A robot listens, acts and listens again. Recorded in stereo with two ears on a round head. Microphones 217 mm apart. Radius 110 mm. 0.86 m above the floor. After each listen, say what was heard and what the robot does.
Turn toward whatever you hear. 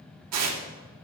The tearing paper: about 75° right or 105° right. Turn 75° right.
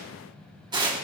So it is at 20° right. Turn 20° right.
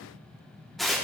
Found it: tearing paper, straight ahead, 1 to 2 m away.